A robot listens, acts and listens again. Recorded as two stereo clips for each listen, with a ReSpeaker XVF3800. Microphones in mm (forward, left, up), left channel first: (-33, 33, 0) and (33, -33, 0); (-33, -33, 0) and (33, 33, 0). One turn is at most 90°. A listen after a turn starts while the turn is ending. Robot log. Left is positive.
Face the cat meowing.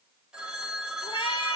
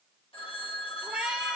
note: The cat meowing: 125° left.
cmd yaw +90
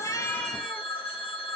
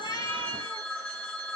note: Nothing new. It was at 35° left.
cmd yaw +35
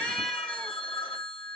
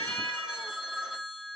cmd idle
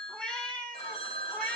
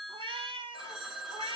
note: The cat meowing is now 60° left.
cmd yaw +60
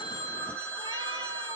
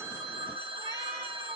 cmd idle
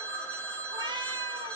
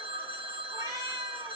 end: Facing the cat meowing.